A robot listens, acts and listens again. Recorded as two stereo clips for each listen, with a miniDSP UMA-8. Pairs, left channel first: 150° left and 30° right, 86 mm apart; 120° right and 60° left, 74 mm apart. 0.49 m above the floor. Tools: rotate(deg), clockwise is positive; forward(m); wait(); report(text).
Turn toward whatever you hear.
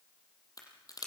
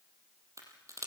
rotate(-110)
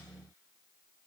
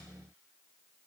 report("Facing where the crack came from. I can't hear it now.")